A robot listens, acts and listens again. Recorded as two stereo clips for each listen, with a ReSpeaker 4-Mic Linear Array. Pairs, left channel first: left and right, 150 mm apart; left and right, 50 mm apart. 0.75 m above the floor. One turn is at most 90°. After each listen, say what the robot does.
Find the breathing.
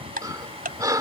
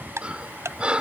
Turn 25° right.
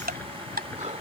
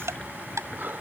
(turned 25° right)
Turn 90° right.
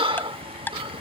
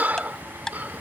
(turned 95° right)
Turn 35° right.
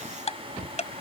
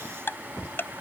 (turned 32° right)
Keep listening.
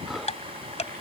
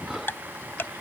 Keep listening.
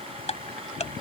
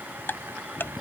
Facing the breathing.